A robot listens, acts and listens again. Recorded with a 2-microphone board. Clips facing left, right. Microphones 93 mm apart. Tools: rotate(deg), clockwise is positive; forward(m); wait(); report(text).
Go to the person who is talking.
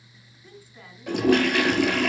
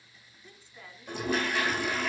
rotate(-30)
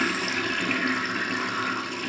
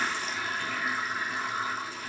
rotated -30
wait()
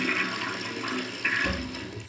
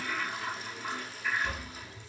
wait()
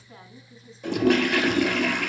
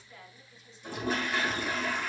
rotate(-140)
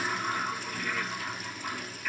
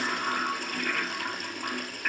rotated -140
wait()
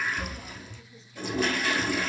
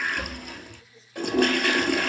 wait()
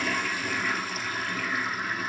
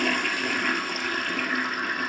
report("I heard a woman speaking from this way, but can't make it out now. I did not reach it.")